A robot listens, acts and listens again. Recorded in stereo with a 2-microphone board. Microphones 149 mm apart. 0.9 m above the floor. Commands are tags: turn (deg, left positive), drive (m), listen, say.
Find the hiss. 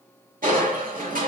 <listen/>
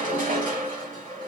<listen/>
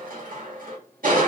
<say>I can't make out a hiss to turn to.</say>